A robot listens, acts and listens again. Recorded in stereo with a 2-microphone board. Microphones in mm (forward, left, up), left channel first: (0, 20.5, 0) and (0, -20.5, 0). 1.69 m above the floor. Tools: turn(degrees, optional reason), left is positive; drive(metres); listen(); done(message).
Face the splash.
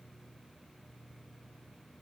listen()
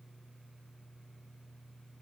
listen()
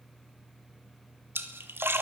turn(degrees=-65, reason="The splash: about 65° right or 115° right.")
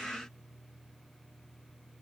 listen()
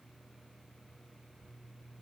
done("I heard a splash, but can't make it out now. It was about straight ahead or 50° right.")